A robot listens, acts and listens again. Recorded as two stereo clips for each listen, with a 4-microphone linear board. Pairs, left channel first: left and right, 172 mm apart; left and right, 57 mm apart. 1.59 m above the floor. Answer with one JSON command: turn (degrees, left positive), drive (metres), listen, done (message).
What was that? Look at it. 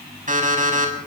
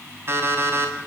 {"turn": -50}
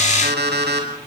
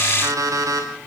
{"turn": -85}
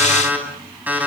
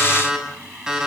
{"turn": -10}
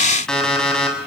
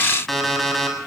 {"done": "Found it: an alarm clock, straight ahead, over 4 m away."}